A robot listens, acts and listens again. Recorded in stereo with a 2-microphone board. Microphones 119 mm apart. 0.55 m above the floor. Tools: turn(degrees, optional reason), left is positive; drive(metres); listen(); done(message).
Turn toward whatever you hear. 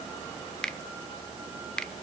turn(degrees=30)
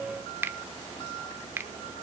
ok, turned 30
turn(degrees=-20, reason="So it is at 20° right.")
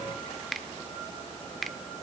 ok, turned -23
done("Found it: a finger snap, straight ahead, 1 to 2 m away.")